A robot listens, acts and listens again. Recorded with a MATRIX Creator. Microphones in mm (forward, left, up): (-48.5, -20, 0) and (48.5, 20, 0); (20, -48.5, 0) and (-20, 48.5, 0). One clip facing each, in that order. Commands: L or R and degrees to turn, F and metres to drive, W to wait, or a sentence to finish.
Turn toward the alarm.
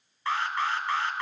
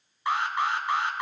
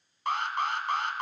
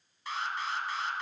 R50
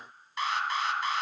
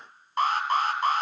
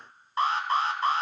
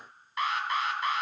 R15
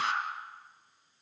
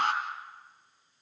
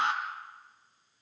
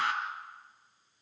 Facing the alarm, 2 to 4 m away.